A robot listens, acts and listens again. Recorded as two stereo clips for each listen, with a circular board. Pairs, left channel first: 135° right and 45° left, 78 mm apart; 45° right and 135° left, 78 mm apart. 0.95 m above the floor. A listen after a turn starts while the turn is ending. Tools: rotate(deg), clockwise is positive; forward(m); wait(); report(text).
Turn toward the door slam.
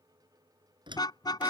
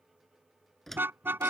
rotate(-40)
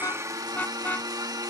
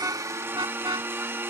report("I heard a door slam from this way, but can't make it out now.")